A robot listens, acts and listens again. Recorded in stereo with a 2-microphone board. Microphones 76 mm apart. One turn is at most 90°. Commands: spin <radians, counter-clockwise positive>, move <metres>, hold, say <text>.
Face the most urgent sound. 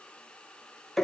hold
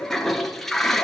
hold
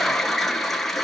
say I can't make out anything urgent to turn to.